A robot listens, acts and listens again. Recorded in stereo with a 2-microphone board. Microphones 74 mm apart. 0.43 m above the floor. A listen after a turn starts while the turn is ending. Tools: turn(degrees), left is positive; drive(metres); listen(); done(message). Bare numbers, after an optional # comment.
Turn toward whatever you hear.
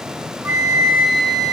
# The flute: about 45° right or 135° right.
turn(-45)
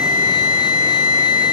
# So it is at 85° right.
turn(-85)
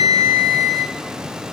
done("Found it: a flute, straight ahead, under 1 m away.")